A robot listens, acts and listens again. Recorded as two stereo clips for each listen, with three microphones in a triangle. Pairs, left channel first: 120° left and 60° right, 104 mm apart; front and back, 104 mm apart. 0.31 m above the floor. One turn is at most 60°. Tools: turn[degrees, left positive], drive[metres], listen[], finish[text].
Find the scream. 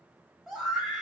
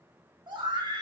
Thought: The scream: 155° right.
Action: turn[-60]
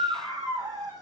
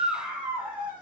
Thought: The scream is now 110° right.
Action: turn[-60]
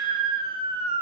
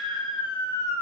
Thought: The scream is now 40° right.
Action: turn[-40]
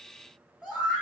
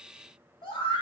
Thought: The scream is now 20° left.
Action: turn[20]
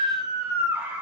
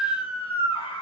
Action: finish[Found it: a scream, straight ahead.]